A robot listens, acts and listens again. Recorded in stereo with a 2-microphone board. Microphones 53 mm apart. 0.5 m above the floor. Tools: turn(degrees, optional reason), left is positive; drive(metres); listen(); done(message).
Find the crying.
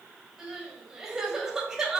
turn(degrees=-30)
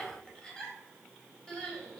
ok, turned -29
turn(degrees=15, reason="So it is at 15° left.")
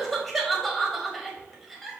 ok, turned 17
done("Facing the crying.")